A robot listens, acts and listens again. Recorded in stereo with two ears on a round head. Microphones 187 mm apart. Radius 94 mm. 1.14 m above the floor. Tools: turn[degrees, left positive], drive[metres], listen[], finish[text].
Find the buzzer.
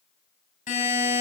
Thought: The buzzer: about 40° left or 140° left.
Action: turn[40]
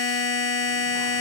Thought: So it is at 100° left.
Action: turn[100]
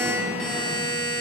Action: finish[Facing the buzzer, 2 to 4 m away.]